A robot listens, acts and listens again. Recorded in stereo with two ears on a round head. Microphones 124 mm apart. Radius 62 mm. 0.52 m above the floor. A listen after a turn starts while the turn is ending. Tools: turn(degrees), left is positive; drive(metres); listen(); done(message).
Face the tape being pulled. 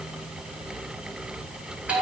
listen()
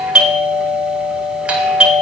listen()
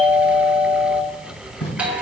turn(degrees=40)
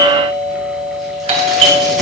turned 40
listen()
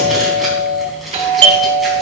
listen()
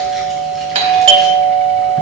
done("I heard tape being pulled, but can't make it out now. It was about straight ahead or 100° left.")